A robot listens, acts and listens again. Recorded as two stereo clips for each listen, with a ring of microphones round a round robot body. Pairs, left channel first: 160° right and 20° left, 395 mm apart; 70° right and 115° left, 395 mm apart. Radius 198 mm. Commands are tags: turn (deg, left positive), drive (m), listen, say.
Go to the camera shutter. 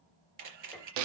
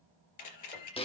<turn deg="-20"/>
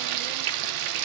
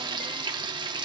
<listen/>
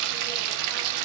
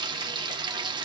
<listen/>
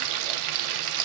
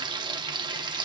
<say>I heard a camera shutter from this way, but can't make it out now. I did not reach it.</say>